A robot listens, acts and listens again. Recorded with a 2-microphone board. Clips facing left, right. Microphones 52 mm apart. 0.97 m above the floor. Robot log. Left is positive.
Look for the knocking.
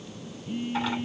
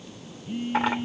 cmd idle
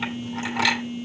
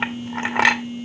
cmd idle
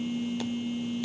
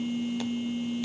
end: I can't make out knocking, only a phone buzzing and a clink.